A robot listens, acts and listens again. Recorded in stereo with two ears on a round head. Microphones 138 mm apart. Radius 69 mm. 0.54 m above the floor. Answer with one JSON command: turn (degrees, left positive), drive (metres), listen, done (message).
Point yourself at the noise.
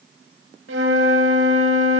{"turn": -90}
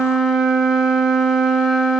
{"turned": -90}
{"done": "Facing the flute."}